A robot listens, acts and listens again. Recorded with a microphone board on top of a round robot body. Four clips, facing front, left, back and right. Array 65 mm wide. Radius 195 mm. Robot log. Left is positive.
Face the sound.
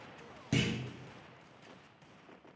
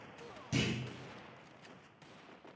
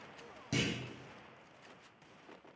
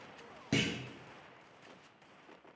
note: The clunk: 70° right.
cmd yaw -70
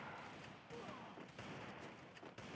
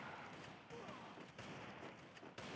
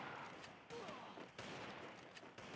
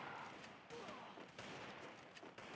end: Facing where the clunk came from. I can't hear it now.